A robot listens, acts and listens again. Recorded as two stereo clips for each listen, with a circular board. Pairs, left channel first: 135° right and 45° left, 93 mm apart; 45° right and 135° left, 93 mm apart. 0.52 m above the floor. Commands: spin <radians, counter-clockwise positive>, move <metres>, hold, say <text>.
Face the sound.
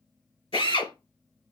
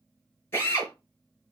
spin -1.92
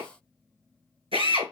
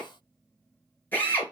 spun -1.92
spin 0.44
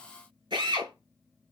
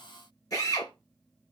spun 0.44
say Facing the drill.